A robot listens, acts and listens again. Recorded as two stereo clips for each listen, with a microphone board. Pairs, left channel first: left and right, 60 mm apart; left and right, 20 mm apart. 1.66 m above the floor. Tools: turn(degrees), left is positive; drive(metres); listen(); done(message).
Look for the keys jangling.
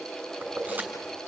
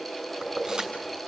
turn(degrees=-30)
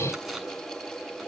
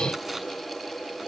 listen()
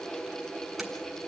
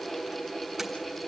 listen()
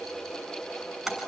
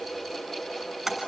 done("Facing the keys jangling.")